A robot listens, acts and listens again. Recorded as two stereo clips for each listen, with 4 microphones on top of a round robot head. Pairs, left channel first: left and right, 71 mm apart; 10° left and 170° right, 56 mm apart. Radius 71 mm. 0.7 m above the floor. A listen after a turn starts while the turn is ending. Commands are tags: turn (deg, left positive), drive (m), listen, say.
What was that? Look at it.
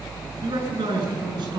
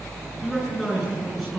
<turn deg="-80"/>
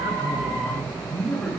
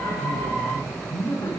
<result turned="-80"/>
<turn deg="15"/>
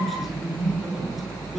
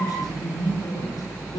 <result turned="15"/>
<say>Found it: a man speaking, straight ahead.</say>